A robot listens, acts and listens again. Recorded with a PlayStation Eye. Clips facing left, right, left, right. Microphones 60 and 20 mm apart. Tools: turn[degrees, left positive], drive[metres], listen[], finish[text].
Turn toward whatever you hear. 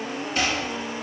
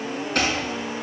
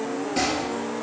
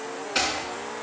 Thought: The chopping: about 70° right or 110° right.
Action: turn[-70]
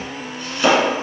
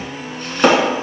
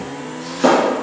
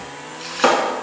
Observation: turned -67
Thought: So it is at 45° right.
Action: turn[-45]
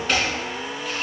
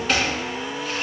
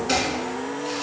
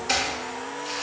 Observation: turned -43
Action: finish[Found it: chopping, straight ahead, 1 to 2 m away.]